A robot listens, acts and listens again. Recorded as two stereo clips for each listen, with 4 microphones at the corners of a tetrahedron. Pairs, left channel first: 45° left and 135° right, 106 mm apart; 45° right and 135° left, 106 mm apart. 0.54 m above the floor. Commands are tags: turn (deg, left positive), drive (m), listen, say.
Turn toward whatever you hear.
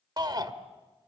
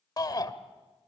<turn deg="-90"/>
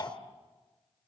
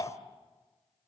<say>Found it: a shout, straight ahead, 1 to 2 m away.</say>